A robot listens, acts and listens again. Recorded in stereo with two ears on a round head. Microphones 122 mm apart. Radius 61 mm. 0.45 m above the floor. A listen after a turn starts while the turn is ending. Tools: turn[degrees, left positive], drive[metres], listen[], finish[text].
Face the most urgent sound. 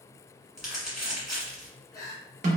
Thought: The crying: about 25° left or 155° left.
Action: turn[25]
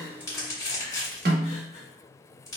Action: listen[]
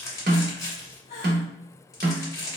Thought: So it is at 125° left.
Action: turn[125]
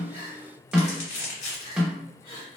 Thought: The crying is now 40° left.
Action: turn[40]
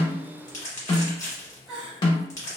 Action: finish[Facing the crying.]